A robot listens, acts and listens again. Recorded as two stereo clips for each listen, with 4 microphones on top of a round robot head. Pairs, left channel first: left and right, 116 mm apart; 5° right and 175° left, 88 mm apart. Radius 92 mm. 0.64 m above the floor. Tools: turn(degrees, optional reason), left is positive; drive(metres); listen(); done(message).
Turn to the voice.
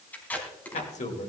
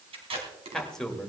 turn(degrees=80, reason="The man speaking: 80° left.")
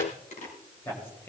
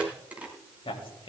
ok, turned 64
turn(degrees=15, reason="The man speaking is now 15° left.")
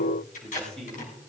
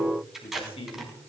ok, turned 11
done("Found it: a man speaking, straight ahead.")